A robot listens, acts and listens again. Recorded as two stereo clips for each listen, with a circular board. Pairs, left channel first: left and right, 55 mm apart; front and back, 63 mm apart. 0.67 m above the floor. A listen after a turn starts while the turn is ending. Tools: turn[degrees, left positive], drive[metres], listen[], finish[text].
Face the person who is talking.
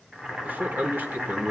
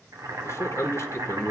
Thought: The man speaking: 35° right.
Action: turn[-35]
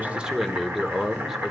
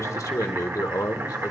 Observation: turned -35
Action: finish[Found it: a man speaking, straight ahead, 1 to 2 m away.]